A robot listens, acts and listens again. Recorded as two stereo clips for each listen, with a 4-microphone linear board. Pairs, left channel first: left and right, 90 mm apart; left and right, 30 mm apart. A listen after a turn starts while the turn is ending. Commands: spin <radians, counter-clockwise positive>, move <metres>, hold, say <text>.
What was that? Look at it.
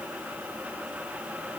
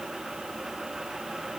hold
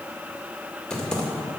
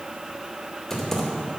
spin 0.52
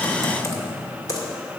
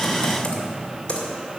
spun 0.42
spin 2.53
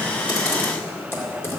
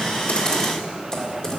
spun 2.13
spin 0.44
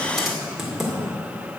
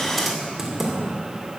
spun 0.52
say Found it: typing on a keyboard, straight ahead.